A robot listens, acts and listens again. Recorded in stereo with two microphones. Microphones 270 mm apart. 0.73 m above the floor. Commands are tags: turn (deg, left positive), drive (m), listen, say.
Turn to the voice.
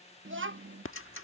<turn deg="-50"/>
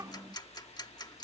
<turn deg="-15"/>
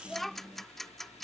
<say>Facing the child speaking.</say>